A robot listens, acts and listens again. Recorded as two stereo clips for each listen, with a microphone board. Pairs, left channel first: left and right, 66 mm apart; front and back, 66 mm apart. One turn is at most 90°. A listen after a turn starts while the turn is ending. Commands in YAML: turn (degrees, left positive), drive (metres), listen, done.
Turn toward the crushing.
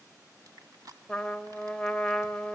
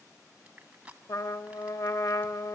turn: -90
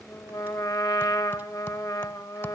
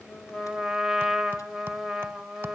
turn: -20
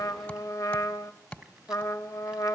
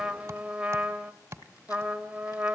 listen: true
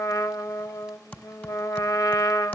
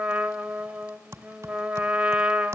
done: "Facing where the crushing came from. I can't hear it now."